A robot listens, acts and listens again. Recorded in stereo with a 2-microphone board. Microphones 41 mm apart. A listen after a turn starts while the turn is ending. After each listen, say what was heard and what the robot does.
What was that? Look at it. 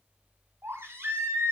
Turn 90° right.
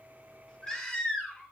So it is at 20° left. Turn 20° left.
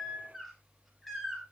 Found it: a baby crying, straight ahead, over 4 m away.